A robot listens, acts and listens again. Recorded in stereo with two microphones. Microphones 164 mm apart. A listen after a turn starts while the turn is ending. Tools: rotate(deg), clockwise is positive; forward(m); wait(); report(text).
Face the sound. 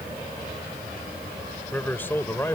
rotate(-15)
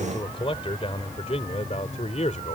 rotate(-135)
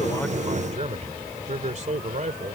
rotate(50)
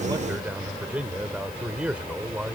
rotate(10)
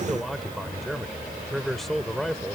report("Facing the man speaking.")